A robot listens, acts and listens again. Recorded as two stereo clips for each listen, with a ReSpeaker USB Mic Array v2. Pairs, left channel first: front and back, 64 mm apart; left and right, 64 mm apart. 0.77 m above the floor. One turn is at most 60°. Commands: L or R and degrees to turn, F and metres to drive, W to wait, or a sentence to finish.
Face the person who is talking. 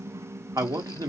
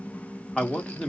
L60
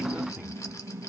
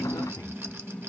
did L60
L60
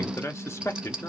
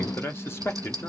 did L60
L45
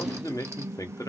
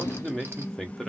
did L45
Facing the man speaking, under 1 m away.